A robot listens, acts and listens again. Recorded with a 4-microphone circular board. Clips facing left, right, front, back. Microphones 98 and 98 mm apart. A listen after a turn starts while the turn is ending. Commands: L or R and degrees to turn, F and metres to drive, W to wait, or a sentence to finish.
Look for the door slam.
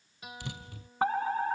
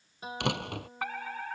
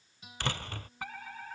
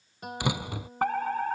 R100
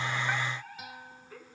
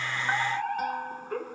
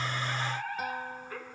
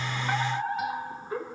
Facing where the door slam came from. I can't hear it now.